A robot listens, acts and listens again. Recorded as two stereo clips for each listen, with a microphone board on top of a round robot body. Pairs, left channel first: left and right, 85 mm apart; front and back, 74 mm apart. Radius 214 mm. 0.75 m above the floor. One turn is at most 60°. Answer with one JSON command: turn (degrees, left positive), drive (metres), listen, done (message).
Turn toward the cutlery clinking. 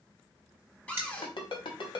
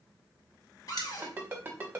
{"turn": -25}
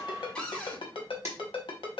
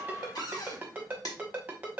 {"listen": true}
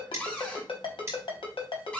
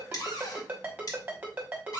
{"turn": -30}
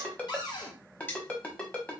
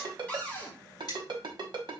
{"turn": 25}
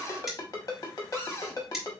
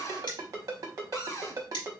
{"done": "Facing the cutlery clinking."}